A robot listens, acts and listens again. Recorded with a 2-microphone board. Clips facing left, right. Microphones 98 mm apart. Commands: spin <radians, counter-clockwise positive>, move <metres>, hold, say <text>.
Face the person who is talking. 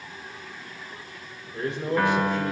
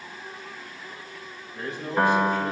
spin 1.57
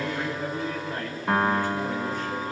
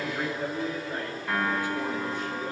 spin -0.26
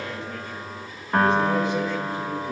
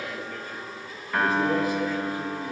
say Found it: a man speaking, straight ahead.